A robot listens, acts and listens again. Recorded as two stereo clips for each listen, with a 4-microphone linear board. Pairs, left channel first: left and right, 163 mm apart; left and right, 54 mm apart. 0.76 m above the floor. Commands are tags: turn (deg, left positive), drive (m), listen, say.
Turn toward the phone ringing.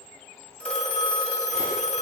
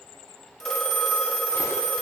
<turn deg="30"/>
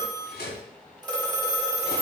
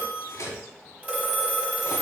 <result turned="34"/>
<turn deg="-25"/>
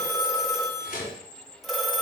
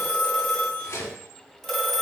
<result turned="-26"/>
<say>Found it: a phone ringing, straight ahead, 1 to 2 m away.</say>